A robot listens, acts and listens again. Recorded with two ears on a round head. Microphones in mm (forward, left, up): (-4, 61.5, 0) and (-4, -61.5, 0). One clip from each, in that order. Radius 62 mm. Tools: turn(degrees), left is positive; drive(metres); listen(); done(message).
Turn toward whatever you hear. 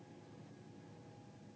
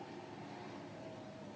listen()
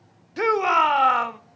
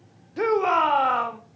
turn(degrees=50)
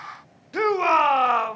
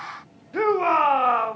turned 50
turn(degrees=80)
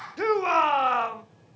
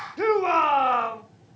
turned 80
turn(degrees=20)
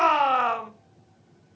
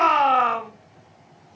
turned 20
done("Facing the shout.")